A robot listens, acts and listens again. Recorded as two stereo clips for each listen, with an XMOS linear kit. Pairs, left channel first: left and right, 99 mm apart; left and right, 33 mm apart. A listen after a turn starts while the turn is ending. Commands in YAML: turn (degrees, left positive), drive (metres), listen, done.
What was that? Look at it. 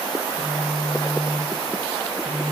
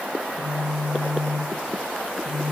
turn: -75
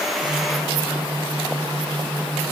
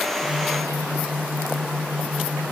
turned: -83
turn: -25
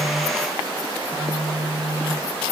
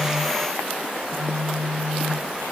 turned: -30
done: "Found it: a phone buzzing, straight ahead."